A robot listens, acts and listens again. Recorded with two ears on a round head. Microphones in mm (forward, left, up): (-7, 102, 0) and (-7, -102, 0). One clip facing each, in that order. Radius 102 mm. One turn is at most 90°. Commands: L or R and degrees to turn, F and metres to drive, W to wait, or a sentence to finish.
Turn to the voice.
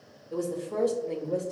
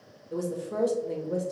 R30
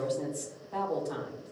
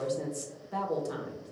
R90
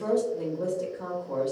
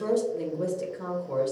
R45
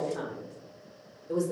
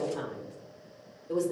Found it: a woman speaking, straight ahead, 1 to 2 m away.